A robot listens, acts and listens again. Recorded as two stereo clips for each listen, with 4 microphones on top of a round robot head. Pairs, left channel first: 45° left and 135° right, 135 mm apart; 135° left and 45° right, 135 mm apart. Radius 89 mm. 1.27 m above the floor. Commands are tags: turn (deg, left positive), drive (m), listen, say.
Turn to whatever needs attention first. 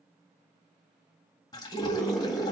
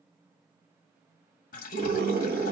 <turn deg="-45"/>
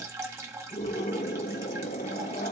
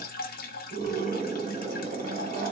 <say>Facing the scream, 1 to 2 m away.</say>